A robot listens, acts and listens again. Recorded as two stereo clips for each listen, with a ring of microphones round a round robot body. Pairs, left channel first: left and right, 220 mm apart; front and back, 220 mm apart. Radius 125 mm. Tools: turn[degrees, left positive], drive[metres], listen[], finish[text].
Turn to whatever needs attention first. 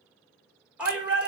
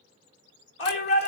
Action: finish[Facing the shout, 2 to 4 m away.]